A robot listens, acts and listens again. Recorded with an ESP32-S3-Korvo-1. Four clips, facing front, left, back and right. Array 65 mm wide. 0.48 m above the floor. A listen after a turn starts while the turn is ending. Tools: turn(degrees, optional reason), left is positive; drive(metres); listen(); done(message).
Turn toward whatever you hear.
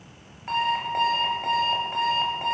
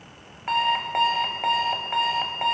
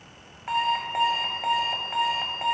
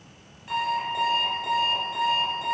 turn(degrees=105, reason="The alarm clock: 105° left.")
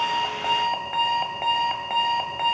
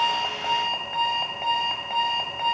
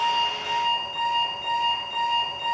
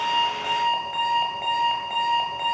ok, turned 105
turn(degrees=15, reason="The alarm clock is now 15° left.")
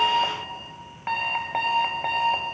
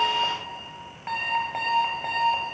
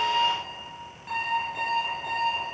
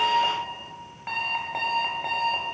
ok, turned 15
done("Found it: an alarm clock, straight ahead, 1 to 2 m away.")